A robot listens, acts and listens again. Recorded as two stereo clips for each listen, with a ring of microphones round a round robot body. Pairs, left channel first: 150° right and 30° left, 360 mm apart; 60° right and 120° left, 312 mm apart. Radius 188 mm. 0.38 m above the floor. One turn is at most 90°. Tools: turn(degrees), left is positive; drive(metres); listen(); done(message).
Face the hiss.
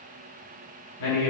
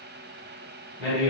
listen()
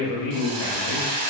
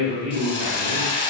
turn(degrees=15)
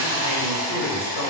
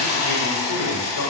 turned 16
done("Found it: a hiss, straight ahead, 1 to 2 m away.")